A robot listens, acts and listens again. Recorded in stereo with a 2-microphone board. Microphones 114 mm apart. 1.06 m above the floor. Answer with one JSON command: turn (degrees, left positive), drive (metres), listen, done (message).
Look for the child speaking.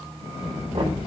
{"turn": 70}
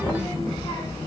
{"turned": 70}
{"turn": 40}
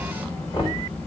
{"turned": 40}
{"turn": 15}
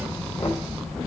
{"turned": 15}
{"done": "Facing the child speaking, 2 to 4 m away."}